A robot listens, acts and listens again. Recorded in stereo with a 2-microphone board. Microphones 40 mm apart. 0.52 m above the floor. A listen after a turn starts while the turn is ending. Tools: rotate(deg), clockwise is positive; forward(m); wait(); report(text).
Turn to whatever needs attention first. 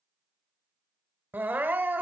rotate(50)
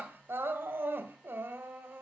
rotate(75)
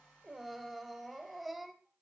report("Found it: crying, straight ahead, 1 to 2 m away.")